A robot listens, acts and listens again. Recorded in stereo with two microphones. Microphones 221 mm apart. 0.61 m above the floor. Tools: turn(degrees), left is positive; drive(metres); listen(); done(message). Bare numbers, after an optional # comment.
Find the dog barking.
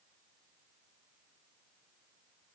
listen()
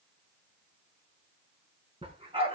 # The dog barking: about 25° right or 155° right.
turn(-25)
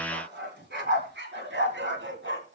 # So it is at 120° right.
turn(-120)
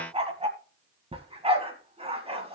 # The dog barking is now 25° right.
turn(-25)
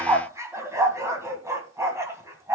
# The dog barking is now 10° right.
turn(-10)
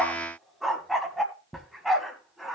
done("Facing the dog barking.")